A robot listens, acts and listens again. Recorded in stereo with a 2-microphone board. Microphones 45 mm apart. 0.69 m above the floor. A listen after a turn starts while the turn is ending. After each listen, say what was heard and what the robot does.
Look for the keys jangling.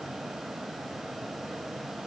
Keep listening.
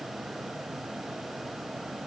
Keep listening.
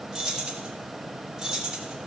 Turn 30° right.
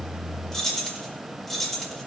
Facing the keys jangling.